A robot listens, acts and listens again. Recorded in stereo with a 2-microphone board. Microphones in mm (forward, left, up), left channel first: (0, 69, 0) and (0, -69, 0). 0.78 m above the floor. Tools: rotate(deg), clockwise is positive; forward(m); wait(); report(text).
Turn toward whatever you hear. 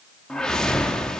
rotate(-30)
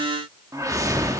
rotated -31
rotate(25)
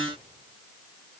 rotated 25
wait()
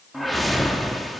report("Facing the whoosh.")